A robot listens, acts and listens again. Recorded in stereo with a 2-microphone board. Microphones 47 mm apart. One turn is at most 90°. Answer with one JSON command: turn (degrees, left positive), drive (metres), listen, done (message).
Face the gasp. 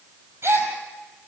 {"turn": -70}
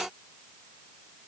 {"listen": true}
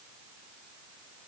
{"done": "I heard a gasp, but can't make it out now. It was about straight ahead or 40° right."}